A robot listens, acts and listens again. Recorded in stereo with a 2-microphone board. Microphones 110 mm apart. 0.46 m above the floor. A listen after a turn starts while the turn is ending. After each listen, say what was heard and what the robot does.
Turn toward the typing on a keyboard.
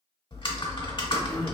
The typing on a keyboard: about 50° left or 130° left. Turn 50° left.
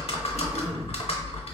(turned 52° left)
So it is at 75° left. Turn 75° left.
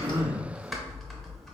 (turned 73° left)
Facing the typing on a keyboard.